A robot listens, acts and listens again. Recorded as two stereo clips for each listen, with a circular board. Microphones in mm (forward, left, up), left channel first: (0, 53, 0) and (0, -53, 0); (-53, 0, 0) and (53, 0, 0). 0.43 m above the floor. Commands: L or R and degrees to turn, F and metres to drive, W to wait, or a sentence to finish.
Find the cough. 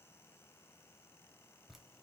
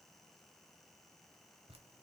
W
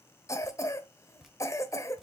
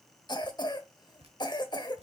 L145
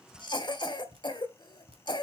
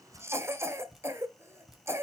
L60
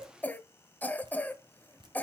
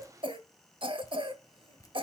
L20
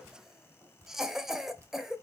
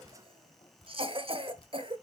Facing the cough, 1 to 2 m away.